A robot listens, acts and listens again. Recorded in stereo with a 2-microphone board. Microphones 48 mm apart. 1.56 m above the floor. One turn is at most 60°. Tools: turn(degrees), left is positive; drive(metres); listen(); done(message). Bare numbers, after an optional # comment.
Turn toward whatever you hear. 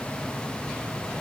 listen()
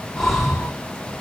turn(30)
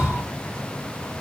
# So it is at 20° right.
turn(-20)
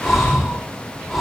done("Facing the breathing, over 4 m away.")